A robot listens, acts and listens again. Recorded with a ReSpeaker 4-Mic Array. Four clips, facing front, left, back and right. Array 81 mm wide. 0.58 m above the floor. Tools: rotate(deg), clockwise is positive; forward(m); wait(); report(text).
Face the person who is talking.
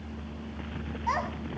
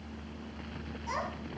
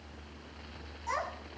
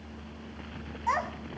rotate(60)
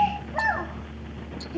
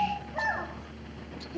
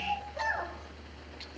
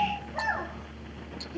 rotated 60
report("Facing the child speaking, 2 to 4 m away.")